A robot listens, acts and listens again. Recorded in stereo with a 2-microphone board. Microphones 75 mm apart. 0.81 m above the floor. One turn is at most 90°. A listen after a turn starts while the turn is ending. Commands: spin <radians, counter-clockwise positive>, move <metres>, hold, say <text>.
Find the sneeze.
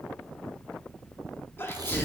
spin 0.52
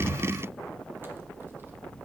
hold
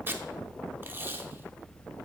say I heard a sneeze, but can't make it out now. It was about straight ahead or 120° left.